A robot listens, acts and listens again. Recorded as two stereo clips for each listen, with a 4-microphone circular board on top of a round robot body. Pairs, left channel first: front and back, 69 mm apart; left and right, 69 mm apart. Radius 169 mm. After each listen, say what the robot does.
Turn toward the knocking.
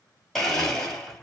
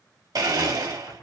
Turn 80° left.
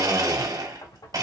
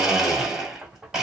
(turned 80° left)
Turn 10° right.
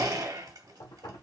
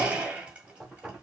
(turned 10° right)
Facing the knocking, 1 to 2 m away.